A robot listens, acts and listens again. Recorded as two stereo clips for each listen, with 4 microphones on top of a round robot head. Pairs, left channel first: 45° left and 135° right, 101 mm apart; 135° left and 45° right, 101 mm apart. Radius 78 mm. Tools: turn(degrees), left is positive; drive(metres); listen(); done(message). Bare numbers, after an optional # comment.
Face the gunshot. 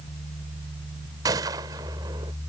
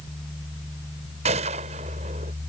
# The gunshot: 75° right.
turn(-75)
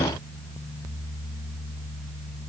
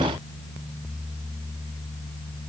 done("Facing where the gunshot came from. I can't hear it now.")